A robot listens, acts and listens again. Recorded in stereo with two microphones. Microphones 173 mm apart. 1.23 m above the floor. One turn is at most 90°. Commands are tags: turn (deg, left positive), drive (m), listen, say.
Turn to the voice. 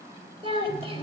<turn deg="-35"/>
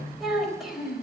<say>Found it: a child speaking, straight ahead, 2 to 4 m away.</say>